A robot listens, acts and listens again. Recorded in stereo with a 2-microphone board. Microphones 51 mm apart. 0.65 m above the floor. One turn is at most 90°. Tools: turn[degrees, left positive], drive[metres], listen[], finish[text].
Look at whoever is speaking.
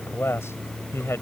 Thought: The man speaking: about 65° left or 115° left.
Action: turn[65]
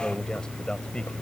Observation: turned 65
Thought: So it is at 20° left.
Action: turn[20]
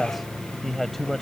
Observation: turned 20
Action: finish[Facing the man speaking.]